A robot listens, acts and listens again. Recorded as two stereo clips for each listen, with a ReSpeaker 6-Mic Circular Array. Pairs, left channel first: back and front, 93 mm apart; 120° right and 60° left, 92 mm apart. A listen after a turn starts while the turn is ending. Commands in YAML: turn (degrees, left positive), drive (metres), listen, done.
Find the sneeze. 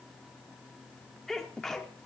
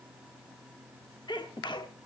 turn: -95
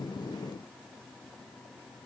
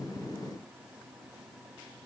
done: "I heard a sneeze from this way, but can't make it out now."